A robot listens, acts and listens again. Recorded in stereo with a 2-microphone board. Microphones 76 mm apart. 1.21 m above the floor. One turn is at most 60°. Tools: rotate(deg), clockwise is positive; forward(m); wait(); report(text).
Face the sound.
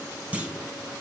rotate(15)
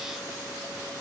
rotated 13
wait()
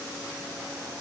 report("I heard a clunk, but can't make it out now. It was about 5° right or 150° right.")